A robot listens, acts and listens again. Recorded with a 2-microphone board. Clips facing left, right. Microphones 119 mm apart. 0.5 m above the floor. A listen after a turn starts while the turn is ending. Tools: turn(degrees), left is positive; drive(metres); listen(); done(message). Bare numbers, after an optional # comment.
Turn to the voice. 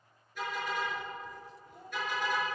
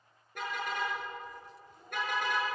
# The child speaking: about 60° left or 120° left.
turn(60)
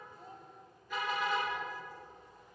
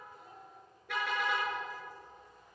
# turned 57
listen()
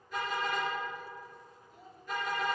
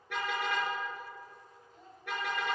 done("Facing the child speaking, 2 to 4 m away.")